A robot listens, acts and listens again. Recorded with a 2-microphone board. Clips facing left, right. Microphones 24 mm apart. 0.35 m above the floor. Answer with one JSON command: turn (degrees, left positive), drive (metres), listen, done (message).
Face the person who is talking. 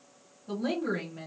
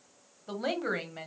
{"turn": -55}
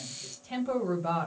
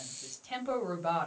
{"turn": -15}
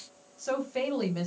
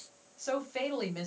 {"done": "Facing the woman speaking."}